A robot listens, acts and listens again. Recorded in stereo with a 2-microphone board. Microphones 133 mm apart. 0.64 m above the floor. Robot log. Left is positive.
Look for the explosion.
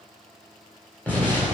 cmd yaw +30
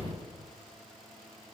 note: So it is at 135° left.
cmd yaw +135
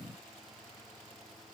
end: Facing where the explosion came from. I can't hear it now.